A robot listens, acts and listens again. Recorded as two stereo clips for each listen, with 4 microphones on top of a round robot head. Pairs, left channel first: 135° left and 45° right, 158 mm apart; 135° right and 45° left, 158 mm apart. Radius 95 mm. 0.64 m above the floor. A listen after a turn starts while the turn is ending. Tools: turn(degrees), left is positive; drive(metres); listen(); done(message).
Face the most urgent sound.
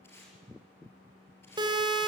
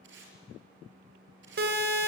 turn(degrees=20)
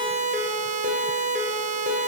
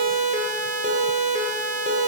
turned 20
done("Found it: a siren, straight ahead.")